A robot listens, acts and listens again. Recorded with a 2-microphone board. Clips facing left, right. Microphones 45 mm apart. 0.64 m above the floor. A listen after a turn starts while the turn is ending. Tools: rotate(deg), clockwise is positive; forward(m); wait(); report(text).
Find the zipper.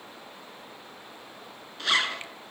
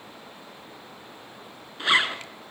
rotate(25)
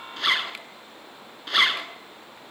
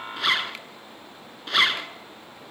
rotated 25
report("Facing the zipper.")